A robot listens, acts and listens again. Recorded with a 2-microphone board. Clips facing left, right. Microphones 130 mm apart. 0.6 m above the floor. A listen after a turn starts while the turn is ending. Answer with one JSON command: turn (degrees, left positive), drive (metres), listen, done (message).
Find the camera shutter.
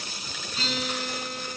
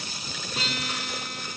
{"listen": true}
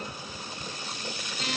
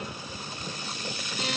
{"listen": true}
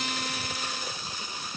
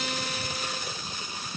{"done": "I can't make out a camera shutter, only a guitar."}